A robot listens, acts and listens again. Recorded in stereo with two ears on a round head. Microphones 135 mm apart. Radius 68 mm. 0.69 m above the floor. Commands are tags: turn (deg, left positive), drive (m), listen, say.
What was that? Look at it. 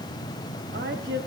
<turn deg="-90"/>
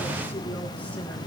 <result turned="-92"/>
<listen/>
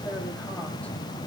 <turn deg="10"/>
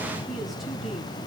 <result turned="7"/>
<listen/>
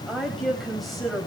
<say>Facing the woman speaking.</say>